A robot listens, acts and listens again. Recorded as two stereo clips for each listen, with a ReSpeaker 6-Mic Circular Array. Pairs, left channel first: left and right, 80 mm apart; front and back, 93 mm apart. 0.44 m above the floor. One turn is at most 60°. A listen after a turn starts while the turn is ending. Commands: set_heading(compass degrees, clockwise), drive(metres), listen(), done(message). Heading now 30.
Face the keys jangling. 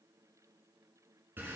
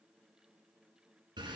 listen()
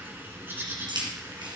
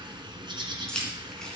set_heading(90)
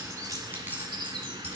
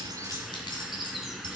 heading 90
set_heading(110)
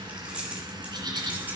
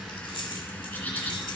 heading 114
set_heading(129)
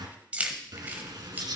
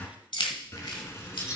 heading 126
set_heading(151)
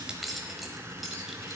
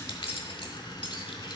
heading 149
done("Found it: keys jangling, straight ahead, 1 to 2 m away.")